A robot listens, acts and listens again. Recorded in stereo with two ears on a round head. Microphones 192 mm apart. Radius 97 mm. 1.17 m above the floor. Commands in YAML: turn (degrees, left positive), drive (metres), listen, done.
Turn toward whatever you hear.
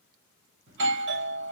turn: -50
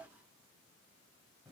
listen: true
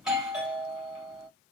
done: "Found it: a doorbell, straight ahead."